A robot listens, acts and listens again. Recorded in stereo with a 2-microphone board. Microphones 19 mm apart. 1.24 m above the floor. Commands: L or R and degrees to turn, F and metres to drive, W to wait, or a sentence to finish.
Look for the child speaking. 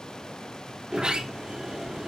W
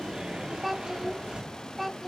R30
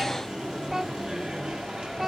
W
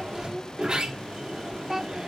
R145
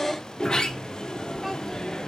W
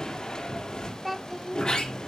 Found it: a child speaking, straight ahead.